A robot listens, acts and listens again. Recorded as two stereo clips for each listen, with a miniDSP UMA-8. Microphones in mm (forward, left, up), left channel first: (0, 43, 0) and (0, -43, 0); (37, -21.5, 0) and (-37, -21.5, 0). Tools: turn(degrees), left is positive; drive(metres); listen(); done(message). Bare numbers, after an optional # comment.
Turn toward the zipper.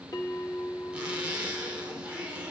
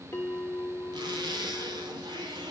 # The zipper: 165° right.
turn(-165)
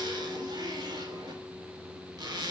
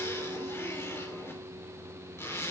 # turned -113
# The zipper is now 55° right.
turn(-55)
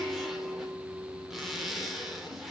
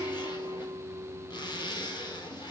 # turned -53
done("Facing the zipper, 2 to 4 m away.")